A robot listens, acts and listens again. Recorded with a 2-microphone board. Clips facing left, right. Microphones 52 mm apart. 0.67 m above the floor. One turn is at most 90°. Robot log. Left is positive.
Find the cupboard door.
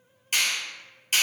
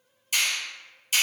cmd idle
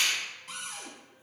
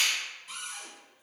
note: The cupboard door: about 60° left or 120° left.
cmd yaw +60
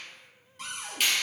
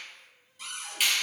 note: So it is at 55° left.
cmd yaw +55
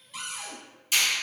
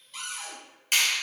end: Facing the cupboard door.